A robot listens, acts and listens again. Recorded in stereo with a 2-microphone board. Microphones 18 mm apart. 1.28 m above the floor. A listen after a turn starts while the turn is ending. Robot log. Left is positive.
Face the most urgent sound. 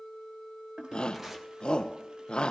note: The shout: about 70° left or 110° left.
cmd yaw +70
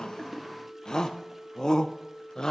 note: So it is at 40° left.
cmd yaw +40
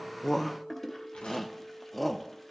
end: Facing the shout.